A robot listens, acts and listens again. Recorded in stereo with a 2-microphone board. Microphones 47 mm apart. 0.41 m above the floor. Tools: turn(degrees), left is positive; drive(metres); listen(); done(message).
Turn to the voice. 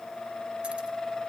listen()
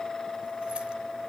listen()
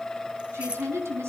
turn(degrees=-90)
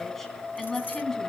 turn(degrees=15)
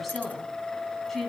turn(degrees=10)
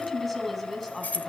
done("Facing the woman speaking.")